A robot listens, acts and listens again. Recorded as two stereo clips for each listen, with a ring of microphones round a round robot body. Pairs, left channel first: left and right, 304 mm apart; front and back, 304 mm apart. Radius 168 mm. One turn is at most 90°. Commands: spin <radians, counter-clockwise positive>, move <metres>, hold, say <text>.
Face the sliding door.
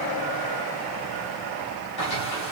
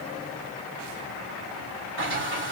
spin 1.57
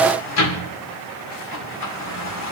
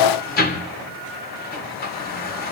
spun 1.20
spin 1.05
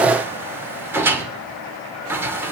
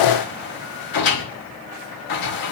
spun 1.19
spin -0.17
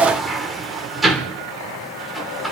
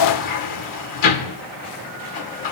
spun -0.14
say Facing the sliding door.